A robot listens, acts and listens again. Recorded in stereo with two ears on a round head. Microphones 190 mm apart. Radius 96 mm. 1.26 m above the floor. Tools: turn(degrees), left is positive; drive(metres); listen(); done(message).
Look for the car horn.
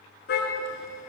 turn(degrees=55)
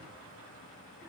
listen()
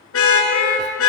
turn(degrees=70)
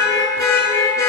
turn(degrees=15)
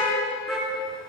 done("Facing the car horn, over 4 m away.")